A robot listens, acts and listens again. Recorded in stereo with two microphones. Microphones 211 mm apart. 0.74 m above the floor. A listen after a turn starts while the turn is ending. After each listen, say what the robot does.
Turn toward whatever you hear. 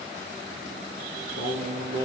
Turn 90° right.
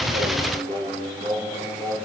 Turn 15° left.
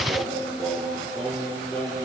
Found it: singing, straight ahead, 2 to 4 m away.